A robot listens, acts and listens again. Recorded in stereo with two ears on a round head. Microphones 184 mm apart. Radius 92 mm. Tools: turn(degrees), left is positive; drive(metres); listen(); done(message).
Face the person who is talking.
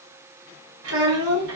turn(degrees=-70)
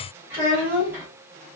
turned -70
turn(degrees=-10)
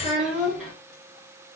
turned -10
done("Facing the child speaking.")